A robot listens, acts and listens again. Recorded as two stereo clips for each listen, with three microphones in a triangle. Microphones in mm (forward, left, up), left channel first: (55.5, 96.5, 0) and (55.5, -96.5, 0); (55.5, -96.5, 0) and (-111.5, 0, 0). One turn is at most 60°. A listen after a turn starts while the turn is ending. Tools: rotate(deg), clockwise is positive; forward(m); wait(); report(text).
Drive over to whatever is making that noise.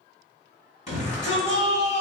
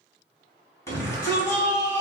rotate(-45)
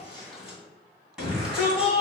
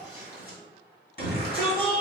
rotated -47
forward(1.0)
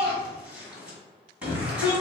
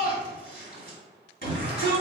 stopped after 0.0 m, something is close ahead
report("Something is in my way. I am facing the shout but have not reached it.")